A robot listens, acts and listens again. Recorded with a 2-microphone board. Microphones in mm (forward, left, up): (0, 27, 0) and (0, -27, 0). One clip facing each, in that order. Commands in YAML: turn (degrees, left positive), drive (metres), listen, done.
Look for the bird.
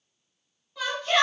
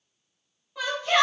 listen: true
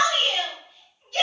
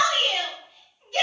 listen: true
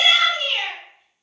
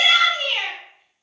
done: "I can't make out a bird to turn to."